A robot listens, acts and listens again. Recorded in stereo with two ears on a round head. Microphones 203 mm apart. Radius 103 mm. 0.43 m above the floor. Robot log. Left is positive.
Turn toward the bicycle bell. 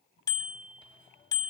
note: The bicycle bell: about 15° left or 165° left.
cmd yaw +15
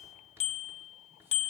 note: So it is at 150° left.
cmd yaw +150
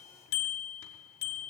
note: The bicycle bell is now 45° left.
cmd yaw +45
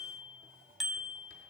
end: Found it: a bicycle bell, straight ahead, 2 to 4 m away.